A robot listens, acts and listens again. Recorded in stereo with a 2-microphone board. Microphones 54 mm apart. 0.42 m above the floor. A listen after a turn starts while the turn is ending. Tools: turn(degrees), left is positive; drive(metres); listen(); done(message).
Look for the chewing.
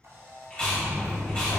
turn(degrees=20)
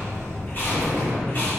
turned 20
listen()
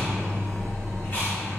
listen()
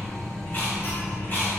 done("I heard chewing, but can't make it out now. It was about straight ahead or 140° left.")